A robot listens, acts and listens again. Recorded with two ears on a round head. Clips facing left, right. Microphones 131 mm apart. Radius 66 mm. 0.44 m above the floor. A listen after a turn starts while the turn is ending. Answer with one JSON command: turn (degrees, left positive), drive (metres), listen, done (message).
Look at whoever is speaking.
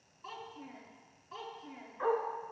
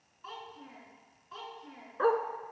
{"turn": 30}
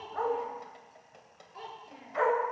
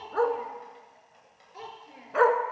{"turn": -25}
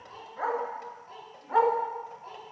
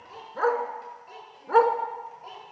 {"turn": -30}
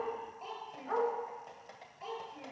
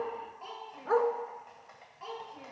{"done": "Facing the child speaking, over 4 m away."}